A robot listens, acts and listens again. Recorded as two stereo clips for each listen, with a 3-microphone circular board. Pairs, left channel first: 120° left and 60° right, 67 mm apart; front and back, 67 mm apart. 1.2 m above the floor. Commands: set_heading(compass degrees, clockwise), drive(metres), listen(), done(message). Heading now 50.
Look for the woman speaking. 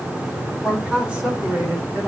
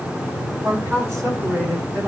set_heading(185)
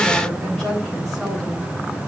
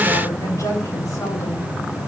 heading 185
set_heading(155)
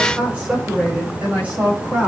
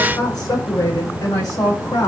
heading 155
done("Found it: a woman speaking, straight ahead.")